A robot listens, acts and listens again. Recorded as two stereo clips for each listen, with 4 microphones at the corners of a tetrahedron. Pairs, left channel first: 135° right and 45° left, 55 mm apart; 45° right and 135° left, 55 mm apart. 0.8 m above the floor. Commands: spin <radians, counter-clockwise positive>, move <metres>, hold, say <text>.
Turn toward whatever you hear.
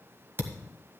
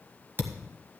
spin 1.48
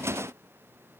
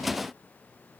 say Facing where the thud came from. I can't hear it now.